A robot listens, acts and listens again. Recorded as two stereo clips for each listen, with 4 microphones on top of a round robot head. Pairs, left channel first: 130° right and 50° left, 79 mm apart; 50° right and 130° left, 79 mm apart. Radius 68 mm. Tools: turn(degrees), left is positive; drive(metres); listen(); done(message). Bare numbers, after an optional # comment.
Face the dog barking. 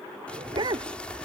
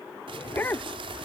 # The dog barking: 15° left.
turn(15)
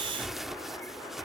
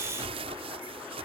listen()
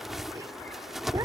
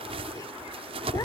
listen()
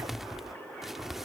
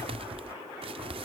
done("I heard a dog barking from this way, but can't make it out now.")